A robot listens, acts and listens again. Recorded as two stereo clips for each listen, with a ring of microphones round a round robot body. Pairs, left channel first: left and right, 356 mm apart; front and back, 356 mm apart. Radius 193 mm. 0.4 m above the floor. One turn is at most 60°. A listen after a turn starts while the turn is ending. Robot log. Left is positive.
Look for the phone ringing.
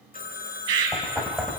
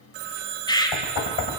note: The phone ringing: 155° left.
cmd yaw +60
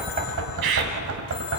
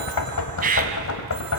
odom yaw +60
note: Nothing new. It was at 95° left.
cmd yaw +60
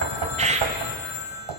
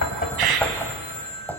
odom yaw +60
note: The phone ringing is now 75° left.
cmd yaw +60
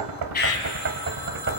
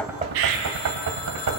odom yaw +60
note: Nothing new. It was at 15° left.
cmd yaw +15
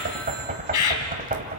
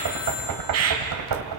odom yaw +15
cmd idle
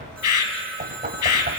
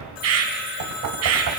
end: Found it: a phone ringing, straight ahead, over 4 m away.